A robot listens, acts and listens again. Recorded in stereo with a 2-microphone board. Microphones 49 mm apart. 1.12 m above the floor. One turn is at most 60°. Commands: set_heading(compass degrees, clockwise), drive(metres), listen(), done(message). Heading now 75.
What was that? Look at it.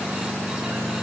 listen()
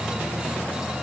listen()
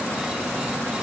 done("I can't make out anything to turn to.")